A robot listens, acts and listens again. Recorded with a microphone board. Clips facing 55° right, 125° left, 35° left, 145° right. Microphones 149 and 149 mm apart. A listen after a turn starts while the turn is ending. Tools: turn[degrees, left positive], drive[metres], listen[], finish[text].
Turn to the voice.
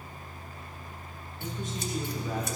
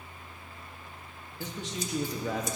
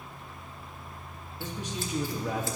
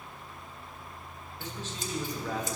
Thought: The man speaking: 110° left.
Action: turn[110]
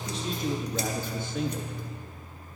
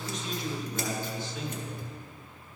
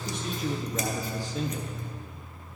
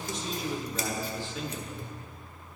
Thought: The man speaking is now 15° right.
Action: turn[-15]
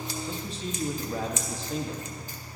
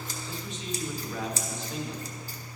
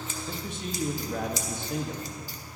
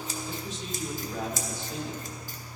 Action: finish[Found it: a man speaking, straight ahead.]